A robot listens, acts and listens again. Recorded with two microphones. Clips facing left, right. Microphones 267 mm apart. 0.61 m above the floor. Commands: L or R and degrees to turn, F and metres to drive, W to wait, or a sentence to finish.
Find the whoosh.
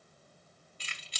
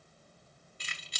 W
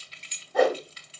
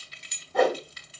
L30
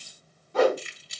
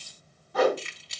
L145
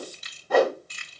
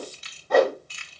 Facing the whoosh, 1 to 2 m away.